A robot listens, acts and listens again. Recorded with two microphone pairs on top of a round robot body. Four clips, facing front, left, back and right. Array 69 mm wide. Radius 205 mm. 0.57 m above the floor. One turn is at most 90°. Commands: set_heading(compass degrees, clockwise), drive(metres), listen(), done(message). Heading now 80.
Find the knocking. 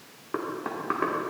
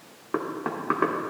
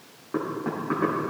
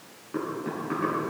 set_heading(5)
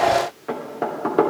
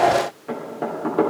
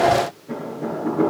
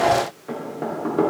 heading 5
done("Facing the knocking, 2 to 4 m away.")